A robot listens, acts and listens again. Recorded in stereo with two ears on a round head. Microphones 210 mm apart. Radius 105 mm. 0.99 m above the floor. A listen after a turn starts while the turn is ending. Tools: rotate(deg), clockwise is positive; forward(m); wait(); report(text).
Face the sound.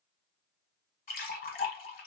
rotate(-40)
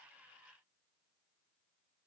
wait()
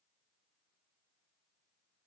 report("I heard a splash, but can't make it out now. It was about straight ahead or 100° left.")